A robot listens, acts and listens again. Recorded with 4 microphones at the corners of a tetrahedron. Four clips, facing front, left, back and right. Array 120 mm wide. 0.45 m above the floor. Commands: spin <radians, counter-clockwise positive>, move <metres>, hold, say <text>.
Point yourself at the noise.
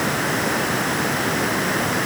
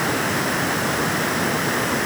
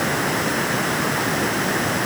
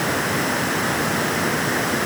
hold
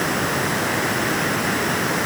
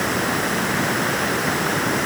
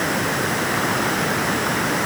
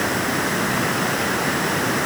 hold
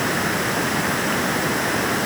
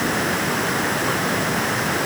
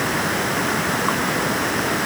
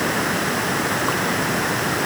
say I can't make out anything.